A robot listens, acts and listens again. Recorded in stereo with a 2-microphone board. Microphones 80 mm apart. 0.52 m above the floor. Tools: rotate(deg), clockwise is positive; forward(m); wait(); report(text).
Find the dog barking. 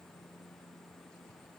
wait()
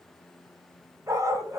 rotate(40)
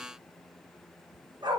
rotate(110)
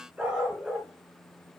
rotate(15)
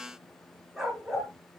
report("Found it: a dog barking, straight ahead.")